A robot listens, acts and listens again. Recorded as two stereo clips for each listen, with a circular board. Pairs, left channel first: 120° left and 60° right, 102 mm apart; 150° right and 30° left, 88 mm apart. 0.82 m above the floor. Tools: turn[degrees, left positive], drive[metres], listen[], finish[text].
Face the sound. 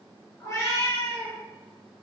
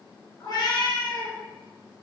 Thought: The cat meowing: 175° right.
Action: turn[-175]
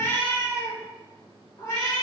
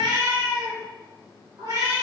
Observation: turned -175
Thought: The cat meowing is now 75° left.
Action: turn[75]
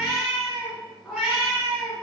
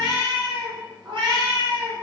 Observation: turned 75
Thought: The cat meowing is now 25° left.
Action: turn[25]
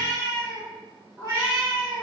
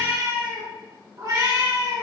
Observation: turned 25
Action: finish[Facing the cat meowing.]